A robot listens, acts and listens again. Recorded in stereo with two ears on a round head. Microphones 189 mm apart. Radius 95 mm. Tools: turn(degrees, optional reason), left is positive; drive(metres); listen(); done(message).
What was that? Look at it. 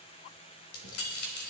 turn(degrees=75, reason="The keys jangling: about 75° left or 105° left.")
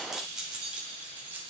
turn(degrees=-10, reason="So it is at 10° right.")
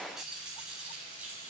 turn(degrees=-10, reason="The keys jangling is now 10° right.")
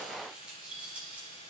done("Facing the keys jangling.")